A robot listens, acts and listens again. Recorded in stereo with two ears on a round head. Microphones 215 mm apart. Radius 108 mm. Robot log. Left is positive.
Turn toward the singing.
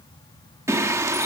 cmd yaw -30
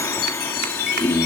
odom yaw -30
note: So it is at 10° left.
cmd yaw +10
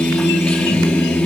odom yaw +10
end: Found it: singing, straight ahead, 1 to 2 m away.